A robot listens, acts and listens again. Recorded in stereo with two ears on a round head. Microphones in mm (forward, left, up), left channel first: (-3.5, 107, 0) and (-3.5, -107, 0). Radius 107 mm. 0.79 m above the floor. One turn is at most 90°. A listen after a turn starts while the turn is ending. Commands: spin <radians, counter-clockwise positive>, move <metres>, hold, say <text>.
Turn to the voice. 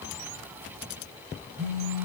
hold
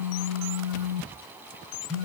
hold
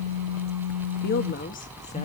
spin 0.61
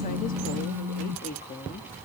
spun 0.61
spin 0.52
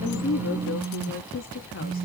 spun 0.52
spin 1.57
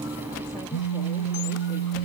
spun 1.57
spin 0.61
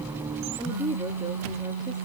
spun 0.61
spin -0.26
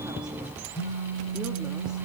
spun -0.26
hold
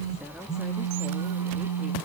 hold
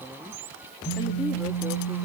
say I heard a woman speaking from this way, but can't make it out now.